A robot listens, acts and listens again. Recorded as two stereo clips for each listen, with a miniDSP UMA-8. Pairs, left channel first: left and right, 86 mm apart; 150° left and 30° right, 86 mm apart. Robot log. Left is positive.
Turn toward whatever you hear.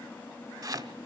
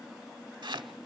note: The chopping: 50° right.
cmd yaw -50
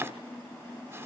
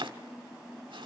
note: The chopping is now 30° right.
cmd yaw -30
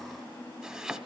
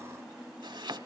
note: The chopping is now 10° right.
cmd yaw -10
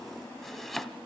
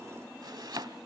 end: Found it: chopping, straight ahead, 1 to 2 m away.